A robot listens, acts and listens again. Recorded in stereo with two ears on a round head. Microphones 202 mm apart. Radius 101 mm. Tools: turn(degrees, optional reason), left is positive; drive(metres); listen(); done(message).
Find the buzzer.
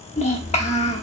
listen()
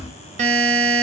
turn(degrees=-30, reason="The buzzer: about 30° right or 150° right.")
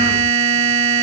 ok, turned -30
turn(degrees=-120, reason="So it is at 120° right.")
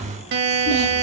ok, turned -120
turn(degrees=-55, reason="The buzzer is now 55° right.")
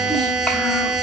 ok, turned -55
done("Facing the buzzer.")